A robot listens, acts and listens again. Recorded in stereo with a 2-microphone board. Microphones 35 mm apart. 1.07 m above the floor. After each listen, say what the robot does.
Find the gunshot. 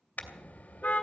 Turn 60° right.
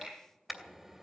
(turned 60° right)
Keep listening.
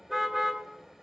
I heard a gunshot, but can't make it out now. It was about straight ahead or 60° right.